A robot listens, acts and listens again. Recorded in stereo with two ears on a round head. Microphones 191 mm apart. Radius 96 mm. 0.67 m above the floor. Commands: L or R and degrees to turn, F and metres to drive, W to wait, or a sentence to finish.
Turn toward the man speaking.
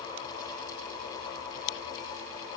W
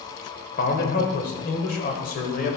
L40
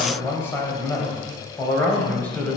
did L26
Facing the man speaking.